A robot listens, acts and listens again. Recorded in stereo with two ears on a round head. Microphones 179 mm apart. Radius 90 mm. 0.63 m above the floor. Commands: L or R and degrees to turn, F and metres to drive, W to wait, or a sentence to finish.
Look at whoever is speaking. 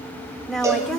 L30
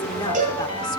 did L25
W
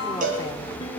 W
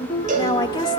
L155
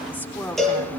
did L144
L10
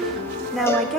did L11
Facing the woman speaking, 2 to 4 m away.